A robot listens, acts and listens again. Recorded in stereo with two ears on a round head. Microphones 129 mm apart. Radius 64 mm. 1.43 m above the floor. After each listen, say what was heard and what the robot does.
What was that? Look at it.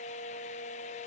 Keep listening.
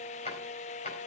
The drawer: about 45° left or 135° left. Turn 45° left.
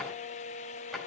Found it: a drawer, straight ahead.